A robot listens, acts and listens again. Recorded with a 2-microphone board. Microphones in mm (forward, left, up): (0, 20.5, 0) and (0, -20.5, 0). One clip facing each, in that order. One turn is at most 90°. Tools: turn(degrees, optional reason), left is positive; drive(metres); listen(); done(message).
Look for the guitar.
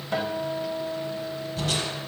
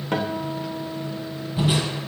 turn(degrees=-60, reason="The guitar: about 60° right or 120° right.")
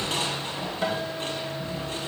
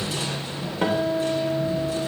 turn(degrees=-60, reason="So it is at 60° right.")
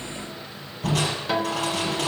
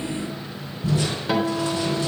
done("Facing the guitar, 2 to 4 m away.")